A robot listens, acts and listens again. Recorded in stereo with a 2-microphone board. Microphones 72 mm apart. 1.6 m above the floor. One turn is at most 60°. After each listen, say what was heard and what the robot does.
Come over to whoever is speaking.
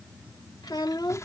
The child speaking: about 75° left or 105° left. Turn 60° left.
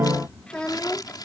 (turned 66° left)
So it is at 15° left. Turn 15° left.
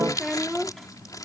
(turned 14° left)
Drive 1.0 m forward.
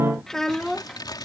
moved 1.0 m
Drive 1.0 m forward.
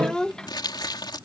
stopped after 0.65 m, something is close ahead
The child speaking is now 15° left. Turn 15° left.
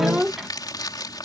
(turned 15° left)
Arrived at the child speaking, straight ahead.